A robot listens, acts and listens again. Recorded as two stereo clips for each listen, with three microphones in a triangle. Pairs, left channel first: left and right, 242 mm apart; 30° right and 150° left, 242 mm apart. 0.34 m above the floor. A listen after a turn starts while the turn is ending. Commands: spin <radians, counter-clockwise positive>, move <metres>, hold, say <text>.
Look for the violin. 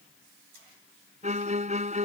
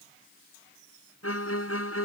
spin -0.52
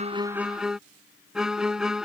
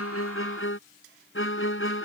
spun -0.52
say Facing the violin.